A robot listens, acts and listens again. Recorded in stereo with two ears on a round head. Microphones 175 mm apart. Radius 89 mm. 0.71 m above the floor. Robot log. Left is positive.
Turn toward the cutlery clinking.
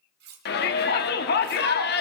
note: The cutlery clinking: about 60° right or 120° right.
cmd yaw -60
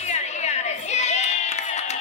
cmd idle
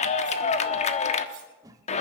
cmd idle
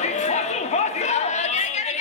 end: I heard cutlery clinking, but can't make it out now. It was about straight ahead or 60° right.